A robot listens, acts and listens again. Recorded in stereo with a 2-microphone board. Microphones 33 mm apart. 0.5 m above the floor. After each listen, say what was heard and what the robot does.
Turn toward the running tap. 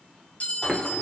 Turn 30° left.
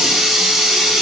So it is at 15° right. Turn 15° right.
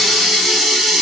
Found it: a running tap, straight ahead, under 1 m away.